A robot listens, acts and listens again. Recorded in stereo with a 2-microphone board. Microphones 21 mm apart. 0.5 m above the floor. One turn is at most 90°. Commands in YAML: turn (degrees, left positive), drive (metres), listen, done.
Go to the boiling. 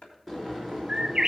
turn: 30
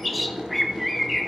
turn: -25
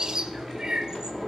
turn: 10
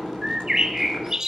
drive: 1.0
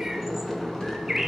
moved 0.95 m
turn: 10
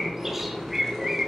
drive: 1.0
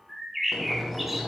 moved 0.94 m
drive: 1.0
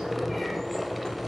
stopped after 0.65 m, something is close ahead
done: "I am next to the boiling."